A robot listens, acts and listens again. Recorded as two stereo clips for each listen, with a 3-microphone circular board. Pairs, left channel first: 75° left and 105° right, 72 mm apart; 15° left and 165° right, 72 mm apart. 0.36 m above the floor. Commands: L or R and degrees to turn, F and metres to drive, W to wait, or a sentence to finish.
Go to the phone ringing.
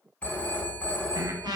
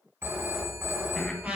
L145
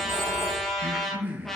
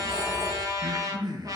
W
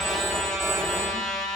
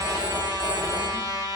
L40
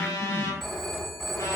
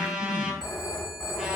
F1.0
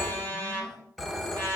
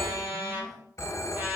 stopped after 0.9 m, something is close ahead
R10
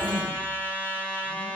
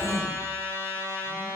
W
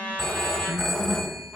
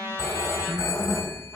Arrived at the phone ringing, straight ahead.